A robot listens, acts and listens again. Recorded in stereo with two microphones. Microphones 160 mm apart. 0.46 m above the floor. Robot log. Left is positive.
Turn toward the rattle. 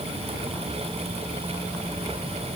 cmd idle
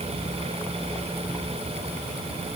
cmd idle
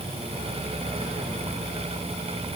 end: I can't make out a rattle to turn to.